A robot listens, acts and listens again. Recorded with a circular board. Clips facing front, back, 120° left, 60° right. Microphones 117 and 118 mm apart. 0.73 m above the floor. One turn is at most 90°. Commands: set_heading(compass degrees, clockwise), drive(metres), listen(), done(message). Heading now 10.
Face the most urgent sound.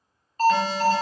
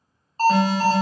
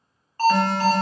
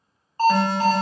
set_heading(100)
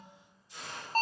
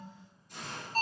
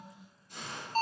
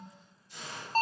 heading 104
set_heading(134)
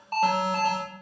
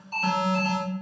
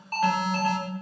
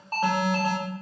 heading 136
done("Facing the alarm.")